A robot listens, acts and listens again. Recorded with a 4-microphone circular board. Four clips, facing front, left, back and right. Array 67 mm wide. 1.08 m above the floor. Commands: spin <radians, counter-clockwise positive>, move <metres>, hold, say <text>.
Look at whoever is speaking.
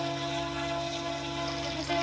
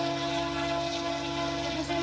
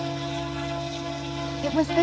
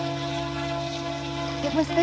spin -2.44
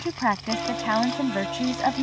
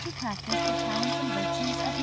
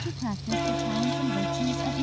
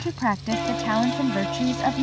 spin -0.52
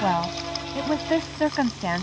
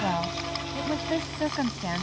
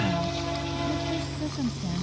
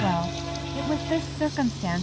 say Facing the woman speaking.